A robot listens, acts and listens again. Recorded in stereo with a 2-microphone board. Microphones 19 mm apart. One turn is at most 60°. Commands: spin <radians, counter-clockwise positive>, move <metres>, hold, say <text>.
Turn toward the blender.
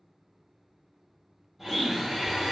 spin -0.52
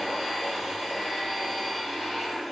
spin 0.26
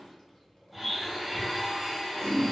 say Facing the blender, 1 to 2 m away.